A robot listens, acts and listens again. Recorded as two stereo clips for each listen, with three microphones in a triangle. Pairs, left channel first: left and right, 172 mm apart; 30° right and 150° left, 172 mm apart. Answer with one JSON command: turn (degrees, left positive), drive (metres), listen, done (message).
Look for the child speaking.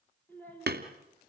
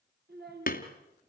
{"turn": 170}
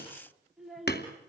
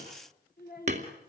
{"done": "Found it: a child speaking, straight ahead, over 4 m away."}